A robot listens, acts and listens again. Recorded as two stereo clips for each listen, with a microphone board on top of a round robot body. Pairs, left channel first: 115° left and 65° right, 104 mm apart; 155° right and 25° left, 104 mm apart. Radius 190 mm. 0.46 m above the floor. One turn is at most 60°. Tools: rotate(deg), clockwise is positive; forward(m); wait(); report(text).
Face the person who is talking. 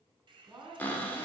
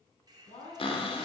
rotate(60)
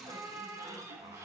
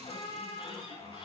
rotate(60)
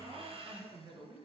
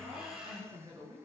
rotate(30)
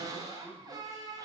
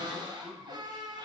wait()
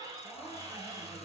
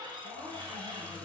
wait()
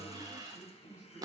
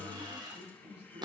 rotate(-10)
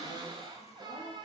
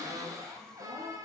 wait()
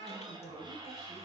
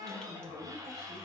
report("Facing the man speaking, over 4 m away.")